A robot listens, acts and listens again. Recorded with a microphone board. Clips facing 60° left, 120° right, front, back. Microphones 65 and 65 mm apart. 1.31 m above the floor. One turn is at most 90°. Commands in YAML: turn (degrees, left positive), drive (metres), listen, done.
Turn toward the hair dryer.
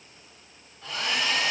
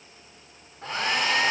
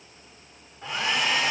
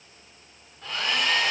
turn: -75
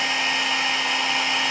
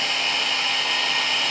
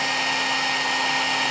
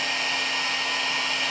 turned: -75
done: "Facing the hair dryer."